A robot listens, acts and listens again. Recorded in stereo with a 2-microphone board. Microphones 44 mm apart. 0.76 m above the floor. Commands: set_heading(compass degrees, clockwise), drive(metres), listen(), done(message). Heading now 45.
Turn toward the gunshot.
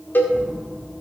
set_heading(65)
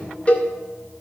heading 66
listen()
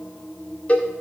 done("I heard a gunshot, but can't make it out now. It was about straight ahead or 140° right.")